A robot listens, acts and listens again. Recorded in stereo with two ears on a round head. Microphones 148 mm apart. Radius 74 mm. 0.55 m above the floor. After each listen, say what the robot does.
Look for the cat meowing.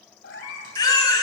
Turn 75° left.
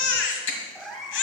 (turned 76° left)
Facing the cat meowing.